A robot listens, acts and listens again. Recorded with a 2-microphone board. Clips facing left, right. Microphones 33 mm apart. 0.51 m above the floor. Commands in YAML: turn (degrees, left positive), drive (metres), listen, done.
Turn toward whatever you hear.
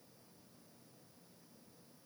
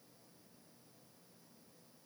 listen: true
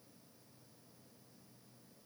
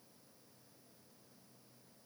listen: true
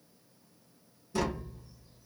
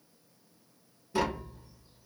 turn: -20
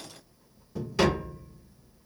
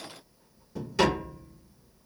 done: "Found it: tapping, straight ahead."